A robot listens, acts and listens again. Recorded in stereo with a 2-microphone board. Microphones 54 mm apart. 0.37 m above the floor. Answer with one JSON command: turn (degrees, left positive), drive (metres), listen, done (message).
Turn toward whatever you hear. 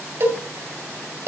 {"turn": -55}
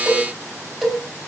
{"turn": -10}
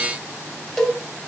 {"done": "Found it: a cowbell, straight ahead, 2 to 4 m away."}